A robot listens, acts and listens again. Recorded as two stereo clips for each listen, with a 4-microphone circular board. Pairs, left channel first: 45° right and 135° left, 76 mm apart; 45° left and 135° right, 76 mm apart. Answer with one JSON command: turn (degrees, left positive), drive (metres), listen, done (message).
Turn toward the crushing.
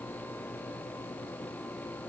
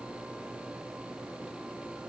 {"listen": true}
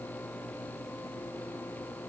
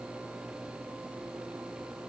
{"listen": true}
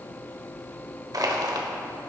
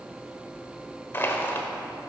{"turn": 105}
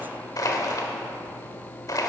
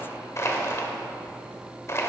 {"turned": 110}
{"done": "Facing the crushing, 1 to 2 m away."}